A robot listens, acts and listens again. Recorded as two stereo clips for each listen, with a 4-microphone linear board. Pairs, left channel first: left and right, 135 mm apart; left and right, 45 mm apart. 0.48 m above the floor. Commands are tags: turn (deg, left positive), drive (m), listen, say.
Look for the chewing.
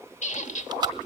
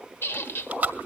<turn deg="-35"/>
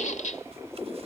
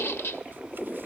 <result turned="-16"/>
<listen/>
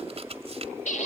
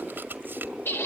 <turn deg="-135"/>
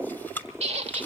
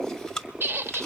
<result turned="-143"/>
<turn deg="15"/>
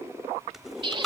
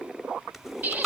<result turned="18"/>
<say>Facing the chewing.</say>